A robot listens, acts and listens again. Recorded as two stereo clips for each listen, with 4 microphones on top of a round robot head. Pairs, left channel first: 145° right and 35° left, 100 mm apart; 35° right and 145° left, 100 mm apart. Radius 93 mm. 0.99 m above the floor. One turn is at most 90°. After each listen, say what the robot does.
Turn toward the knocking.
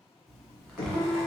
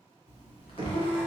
Turn 90° right.
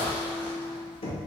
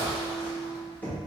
Turn 90° right.
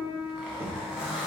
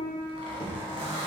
Facing the knocking, under 1 m away.